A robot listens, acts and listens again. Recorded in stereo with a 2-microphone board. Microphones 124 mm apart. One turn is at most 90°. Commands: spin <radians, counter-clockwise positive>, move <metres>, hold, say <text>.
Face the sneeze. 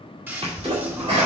spin -0.87
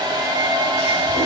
hold
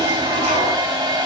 say I heard a sneeze, but can't make it out now. It was about straight ahead or 80° right.